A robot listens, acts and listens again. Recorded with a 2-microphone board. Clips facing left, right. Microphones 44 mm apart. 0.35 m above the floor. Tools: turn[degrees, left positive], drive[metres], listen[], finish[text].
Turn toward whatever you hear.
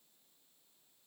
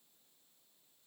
Action: listen[]
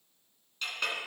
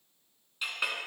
Action: turn[-30]
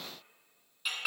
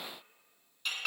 Thought: So it is at 10° left.
Action: turn[10]
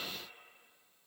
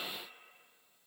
Action: listen[]
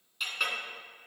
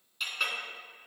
Action: finish[Facing the clink.]